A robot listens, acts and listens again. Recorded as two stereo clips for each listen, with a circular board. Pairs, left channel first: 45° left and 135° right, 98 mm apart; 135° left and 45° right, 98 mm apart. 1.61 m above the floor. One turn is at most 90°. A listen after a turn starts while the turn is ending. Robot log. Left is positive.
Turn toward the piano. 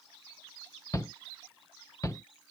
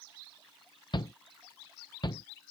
cmd idle
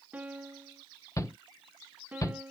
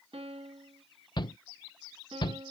note: The piano: 60° right.
cmd yaw -60
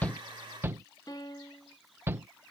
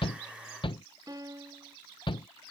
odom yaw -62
end: Facing the piano.